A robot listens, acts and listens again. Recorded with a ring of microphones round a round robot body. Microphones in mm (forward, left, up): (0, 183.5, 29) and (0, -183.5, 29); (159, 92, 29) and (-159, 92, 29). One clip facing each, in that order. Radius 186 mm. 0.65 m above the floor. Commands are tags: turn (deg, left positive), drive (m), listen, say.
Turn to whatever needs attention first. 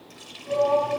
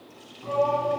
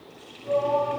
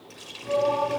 <turn deg="-100"/>
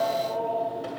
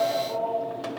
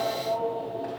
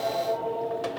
<turn deg="-45"/>
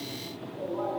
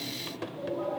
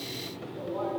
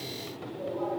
<turn deg="15"/>
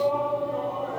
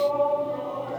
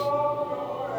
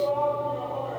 <say>Found it: a shout, straight ahead.</say>